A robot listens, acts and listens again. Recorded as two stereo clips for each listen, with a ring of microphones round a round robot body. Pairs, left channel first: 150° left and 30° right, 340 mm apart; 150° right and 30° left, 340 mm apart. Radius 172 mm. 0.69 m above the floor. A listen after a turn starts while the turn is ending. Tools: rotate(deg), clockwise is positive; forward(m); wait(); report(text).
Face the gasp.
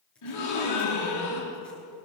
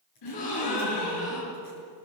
rotate(170)
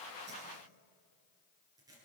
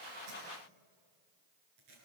report("Facing where the gasp came from. I can't hear it now.")